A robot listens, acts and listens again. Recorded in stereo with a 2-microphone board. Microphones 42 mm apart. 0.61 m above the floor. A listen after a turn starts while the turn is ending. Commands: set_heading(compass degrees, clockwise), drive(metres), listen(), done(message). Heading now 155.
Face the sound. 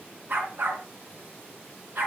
set_heading(205)
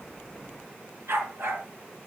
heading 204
set_heading(294)
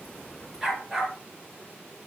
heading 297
done("Facing the dog barking, over 4 m away.")